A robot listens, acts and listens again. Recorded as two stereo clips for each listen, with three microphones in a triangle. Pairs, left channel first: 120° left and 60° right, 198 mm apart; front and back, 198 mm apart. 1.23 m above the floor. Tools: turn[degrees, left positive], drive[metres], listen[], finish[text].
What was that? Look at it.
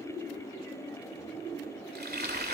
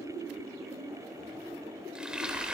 Thought: The frying: 95° right.
Action: turn[-95]
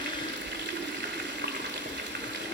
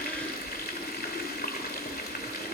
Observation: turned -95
Thought: The frying is now 35° right.
Action: turn[-35]
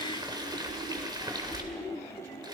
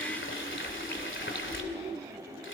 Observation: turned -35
Thought: The frying is now 10° left.
Action: turn[10]
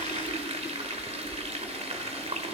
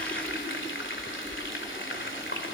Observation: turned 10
Action: finish[Facing the frying, 2 to 4 m away.]